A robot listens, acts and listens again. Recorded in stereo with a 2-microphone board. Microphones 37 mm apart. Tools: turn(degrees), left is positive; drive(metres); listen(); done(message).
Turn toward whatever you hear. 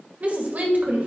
turn(degrees=-50)
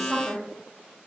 turn(degrees=-15)
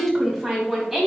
done("Facing the woman speaking.")